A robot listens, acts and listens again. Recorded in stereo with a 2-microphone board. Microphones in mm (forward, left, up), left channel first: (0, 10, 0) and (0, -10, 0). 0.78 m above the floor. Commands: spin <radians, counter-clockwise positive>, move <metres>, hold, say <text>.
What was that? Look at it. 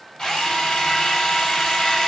spin 0.70
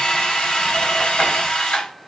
spin 1.75
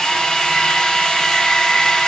spin 0.79
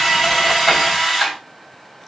say Facing the drill, over 4 m away.